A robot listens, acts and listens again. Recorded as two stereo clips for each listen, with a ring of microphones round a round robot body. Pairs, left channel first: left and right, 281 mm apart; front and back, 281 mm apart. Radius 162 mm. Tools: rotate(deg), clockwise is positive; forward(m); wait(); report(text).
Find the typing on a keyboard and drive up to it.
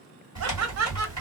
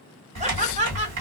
rotate(165)
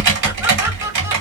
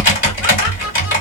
rotate(55)
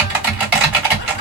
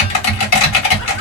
forward(1.0)
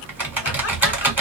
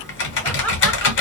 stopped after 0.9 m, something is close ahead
rotate(10)
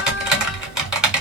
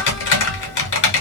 report("Arrived at the typing on a keyboard, straight ahead.")